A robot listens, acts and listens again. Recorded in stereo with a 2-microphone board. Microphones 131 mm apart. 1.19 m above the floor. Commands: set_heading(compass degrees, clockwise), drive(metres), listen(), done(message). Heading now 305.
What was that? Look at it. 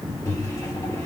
set_heading(280)
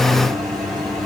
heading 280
done("Found it: a microwave, straight ahead, 2 to 4 m away.")